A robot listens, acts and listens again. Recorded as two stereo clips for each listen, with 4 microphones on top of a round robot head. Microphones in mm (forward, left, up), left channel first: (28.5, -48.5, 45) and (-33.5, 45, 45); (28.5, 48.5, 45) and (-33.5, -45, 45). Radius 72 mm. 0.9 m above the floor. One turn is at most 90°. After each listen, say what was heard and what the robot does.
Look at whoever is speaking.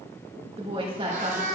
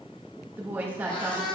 The woman speaking: 165° left. Turn 90° left.
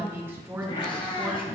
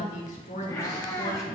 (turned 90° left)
The woman speaking is now 55° left. Turn 55° left.
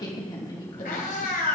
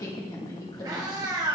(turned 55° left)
Facing the woman speaking, 2 to 4 m away.